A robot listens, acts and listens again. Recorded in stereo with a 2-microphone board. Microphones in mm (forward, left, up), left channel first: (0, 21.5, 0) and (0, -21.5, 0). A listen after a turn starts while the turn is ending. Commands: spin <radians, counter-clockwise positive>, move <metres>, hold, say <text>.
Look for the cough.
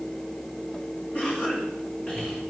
spin 0.44
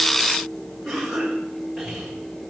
say Facing the cough, over 4 m away.